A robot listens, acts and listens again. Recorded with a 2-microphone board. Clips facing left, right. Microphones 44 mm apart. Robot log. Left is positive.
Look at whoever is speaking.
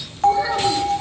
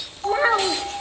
note: The child speaking: about 45° right or 135° right.
cmd yaw -45
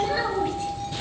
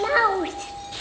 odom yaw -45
note: So it is at 85° right.
cmd yaw -85
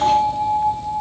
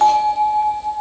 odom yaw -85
cmd idle
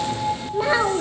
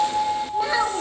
note: The child speaking is now 15° left.
cmd yaw +15
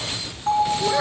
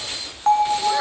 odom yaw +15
cmd idle
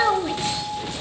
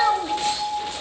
end: Facing the child speaking.